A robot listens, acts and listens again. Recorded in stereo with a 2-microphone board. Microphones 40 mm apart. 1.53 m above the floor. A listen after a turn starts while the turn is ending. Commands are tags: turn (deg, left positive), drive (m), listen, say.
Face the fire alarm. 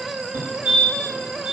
<turn deg="-50"/>
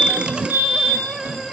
<turn deg="-80"/>
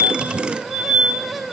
<turn deg="-25"/>
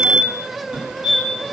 <turn deg="-15"/>
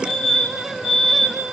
<say>Found it: a fire alarm, straight ahead, over 4 m away.</say>